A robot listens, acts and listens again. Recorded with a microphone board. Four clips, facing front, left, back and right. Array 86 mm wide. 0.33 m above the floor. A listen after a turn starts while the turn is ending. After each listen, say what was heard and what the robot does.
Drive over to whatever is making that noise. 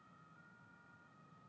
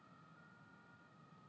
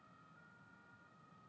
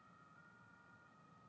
Keep listening.
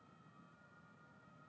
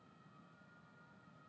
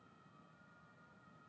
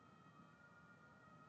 Keep listening.
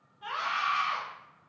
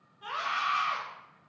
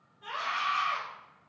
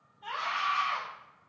The scream: 55° left. Turn 55° left.
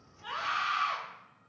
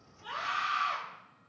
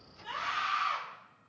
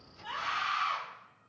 Drive 1.0 m forward.
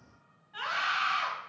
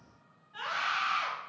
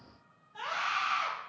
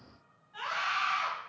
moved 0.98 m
Drive 1.0 m forward.
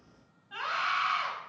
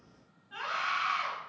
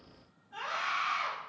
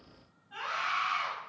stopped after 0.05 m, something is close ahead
Arrived at the scream, straight ahead.